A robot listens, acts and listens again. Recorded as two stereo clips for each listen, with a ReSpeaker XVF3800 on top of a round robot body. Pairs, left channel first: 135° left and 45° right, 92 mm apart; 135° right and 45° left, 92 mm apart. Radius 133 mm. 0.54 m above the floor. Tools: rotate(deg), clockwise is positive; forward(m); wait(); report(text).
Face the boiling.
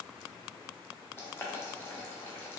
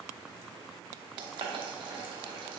rotate(-70)
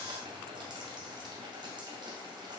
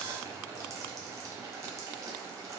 rotate(10)
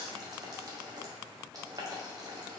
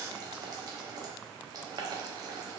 report("Facing the boiling, 1 to 2 m away.")